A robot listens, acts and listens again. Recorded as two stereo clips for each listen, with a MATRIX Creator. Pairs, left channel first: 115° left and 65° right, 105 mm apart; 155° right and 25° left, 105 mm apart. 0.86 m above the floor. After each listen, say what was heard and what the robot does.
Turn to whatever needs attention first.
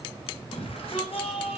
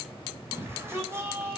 The shout: 90° left. Turn 90° left.
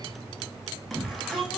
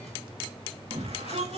The shout is now 25° left. Turn 25° left.
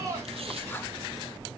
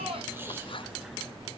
The shout is now 10° right. Turn 10° right.
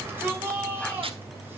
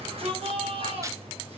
Facing the shout, over 4 m away.